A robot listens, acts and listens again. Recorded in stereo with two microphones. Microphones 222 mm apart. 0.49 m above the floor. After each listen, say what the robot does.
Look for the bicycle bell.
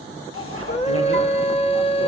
Turn 90° right.
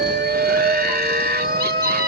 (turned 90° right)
Keep listening.
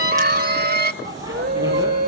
Turn 15° right.
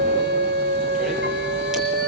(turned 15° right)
Keep listening.
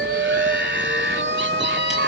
Keep listening.
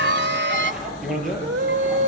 Facing the bicycle bell.